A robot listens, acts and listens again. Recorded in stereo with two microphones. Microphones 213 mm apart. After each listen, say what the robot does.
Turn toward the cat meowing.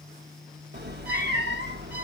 Turn 55° right.
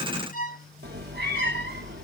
Turn 60° right.
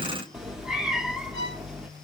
Found it: a cat meowing, straight ahead.